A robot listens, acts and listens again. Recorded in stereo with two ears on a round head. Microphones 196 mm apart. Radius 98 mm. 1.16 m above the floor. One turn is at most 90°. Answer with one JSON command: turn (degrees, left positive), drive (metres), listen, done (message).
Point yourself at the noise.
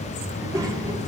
{"turn": -15}
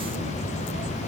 {"listen": true}
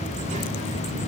{"listen": true}
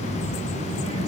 {"turn": -90}
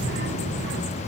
{"turn": -55}
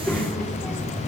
{"done": "Found it: a child speaking, straight ahead."}